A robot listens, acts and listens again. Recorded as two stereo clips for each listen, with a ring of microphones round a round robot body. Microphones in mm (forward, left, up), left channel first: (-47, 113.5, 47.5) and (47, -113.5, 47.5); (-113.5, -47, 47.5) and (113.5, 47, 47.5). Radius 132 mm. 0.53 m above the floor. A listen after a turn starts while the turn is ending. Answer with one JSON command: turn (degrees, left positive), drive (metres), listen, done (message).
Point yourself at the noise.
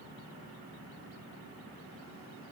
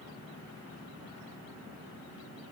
{"listen": true}
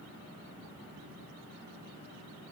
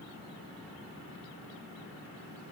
{"listen": true}
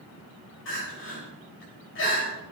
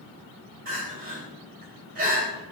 {"turn": 75}
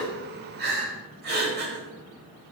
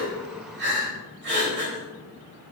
{"turn": -20}
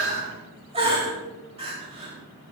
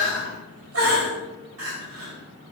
{"done": "Facing the crying, 2 to 4 m away."}